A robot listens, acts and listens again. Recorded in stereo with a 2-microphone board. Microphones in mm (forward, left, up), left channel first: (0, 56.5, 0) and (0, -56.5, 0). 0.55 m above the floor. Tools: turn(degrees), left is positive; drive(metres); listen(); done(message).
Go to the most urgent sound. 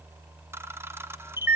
listen()
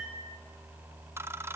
listen()
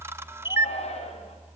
turn(degrees=70)
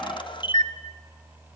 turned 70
listen()
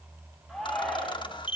drive(metres=1.0)
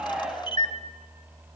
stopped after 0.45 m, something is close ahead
done("Blocked. The shout is further on, straight ahead.")